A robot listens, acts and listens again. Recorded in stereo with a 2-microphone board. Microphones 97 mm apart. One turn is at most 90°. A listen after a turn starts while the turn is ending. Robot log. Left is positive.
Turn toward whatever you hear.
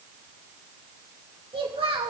cmd yaw -90
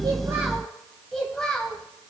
note: So it is at 10° left.
cmd yaw +10
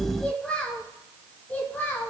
note: The child speaking is now 25° left.
cmd yaw +25
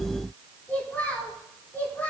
note: The child speaking is now 20° left.
cmd yaw +20
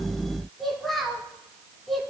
end: Found it: a child speaking, straight ahead, 2 to 4 m away.